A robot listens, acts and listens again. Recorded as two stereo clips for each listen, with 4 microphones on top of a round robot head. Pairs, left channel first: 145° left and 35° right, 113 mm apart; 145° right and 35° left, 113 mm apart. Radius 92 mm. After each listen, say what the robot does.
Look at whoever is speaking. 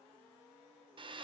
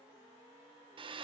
Keep listening.
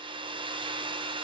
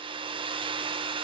Keep listening.
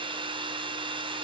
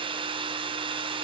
I can't make out anyone speaking, only a hair dryer.